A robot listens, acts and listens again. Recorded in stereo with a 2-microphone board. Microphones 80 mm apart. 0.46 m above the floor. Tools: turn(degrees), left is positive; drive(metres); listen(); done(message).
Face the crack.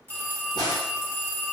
turn(degrees=60)
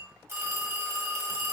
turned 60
listen()
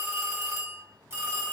done("I heard a crack, but can't make it out now. It was about straight ahead or 60° left.")